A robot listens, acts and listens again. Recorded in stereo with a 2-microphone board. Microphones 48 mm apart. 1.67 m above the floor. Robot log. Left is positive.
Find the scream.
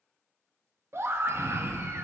note: The scream: about 55° right or 125° right.
cmd yaw -55
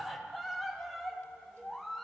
end: Found it: a scream, straight ahead, 1 to 2 m away.